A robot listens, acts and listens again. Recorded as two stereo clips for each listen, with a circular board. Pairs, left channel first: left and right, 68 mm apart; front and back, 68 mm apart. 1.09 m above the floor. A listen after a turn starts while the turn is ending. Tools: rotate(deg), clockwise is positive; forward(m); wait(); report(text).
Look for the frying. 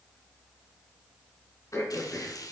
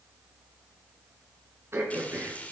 rotate(-70)
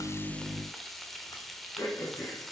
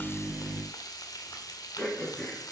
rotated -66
report("Found it: frying, straight ahead, 1 to 2 m away.")